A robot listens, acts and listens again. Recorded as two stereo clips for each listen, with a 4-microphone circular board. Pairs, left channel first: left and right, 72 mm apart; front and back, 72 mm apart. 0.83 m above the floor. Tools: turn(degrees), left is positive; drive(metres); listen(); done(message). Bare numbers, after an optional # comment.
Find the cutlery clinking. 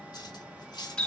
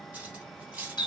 # The cutlery clinking: 105° left.
turn(105)
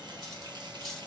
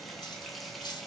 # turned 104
done("Found it: cutlery clinking, straight ahead.")